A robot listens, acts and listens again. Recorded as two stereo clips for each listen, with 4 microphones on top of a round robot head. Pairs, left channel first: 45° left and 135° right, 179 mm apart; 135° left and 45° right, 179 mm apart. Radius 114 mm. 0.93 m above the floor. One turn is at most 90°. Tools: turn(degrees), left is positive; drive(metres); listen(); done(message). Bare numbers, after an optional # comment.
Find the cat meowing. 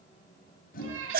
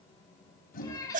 # The cat meowing: 150° right.
turn(-90)
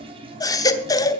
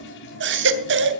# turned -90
# Nothing new. It was at 60° right.
turn(-60)
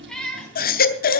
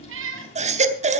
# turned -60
# The cat meowing is now 40° right.
turn(-40)
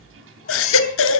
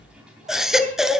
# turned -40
listen()
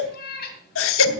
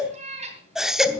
# The cat meowing is now 10° left.
turn(10)
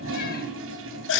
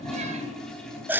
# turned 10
listen()
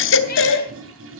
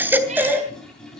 listen()
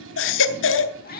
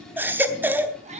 done("Found it: a cat meowing, straight ahead.")